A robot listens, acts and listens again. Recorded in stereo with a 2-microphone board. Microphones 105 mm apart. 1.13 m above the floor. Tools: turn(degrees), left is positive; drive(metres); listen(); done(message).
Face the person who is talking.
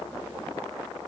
listen()
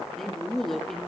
turn(degrees=30)
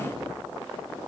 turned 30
listen()
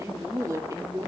turn(degrees=-30)
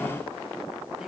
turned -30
listen()
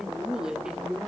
done("Facing the man speaking.")